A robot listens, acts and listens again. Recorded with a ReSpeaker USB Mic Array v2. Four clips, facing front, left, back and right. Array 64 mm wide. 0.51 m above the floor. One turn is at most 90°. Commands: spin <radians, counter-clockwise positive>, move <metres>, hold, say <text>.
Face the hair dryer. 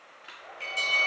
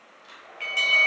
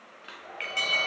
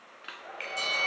spin -1.57
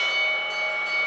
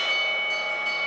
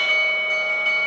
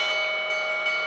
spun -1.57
spin -0.17
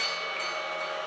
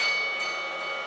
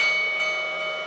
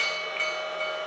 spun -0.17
hold
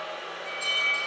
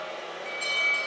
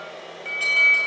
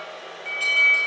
say Facing the hair dryer.